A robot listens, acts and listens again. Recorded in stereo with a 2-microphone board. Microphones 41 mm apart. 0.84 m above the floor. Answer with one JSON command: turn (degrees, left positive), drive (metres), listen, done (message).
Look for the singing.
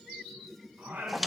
{"turn": -60}
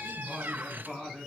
{"turn": 10}
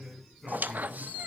{"done": "Facing the singing, over 4 m away."}